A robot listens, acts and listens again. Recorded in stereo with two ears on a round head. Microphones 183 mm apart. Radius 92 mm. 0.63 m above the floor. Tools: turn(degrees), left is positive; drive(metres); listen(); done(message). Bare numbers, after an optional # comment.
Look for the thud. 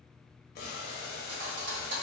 # The thud: about 60° right or 120° right.
turn(-60)
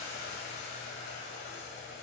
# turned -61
listen()
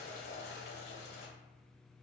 done("I heard a thud, but can't make it out now. It was about straight ahead or 60° right.")